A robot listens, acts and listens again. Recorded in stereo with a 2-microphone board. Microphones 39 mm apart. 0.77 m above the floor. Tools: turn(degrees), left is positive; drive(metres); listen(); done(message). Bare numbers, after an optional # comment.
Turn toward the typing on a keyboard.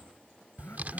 # The typing on a keyboard: about 45° right or 135° right.
turn(-45)
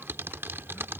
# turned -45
# So it is at 90° right.
turn(-90)
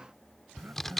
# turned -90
# The typing on a keyboard is now 10° left.
turn(10)
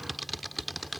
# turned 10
done("Facing the typing on a keyboard.")